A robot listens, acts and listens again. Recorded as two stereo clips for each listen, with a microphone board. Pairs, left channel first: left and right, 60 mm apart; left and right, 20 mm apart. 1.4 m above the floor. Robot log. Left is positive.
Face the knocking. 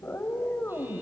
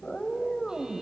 cmd idle
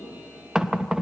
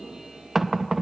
cmd yaw -30
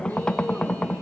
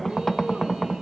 note: So it is at 15° left.
cmd yaw +15
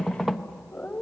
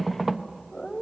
end: Facing the knocking.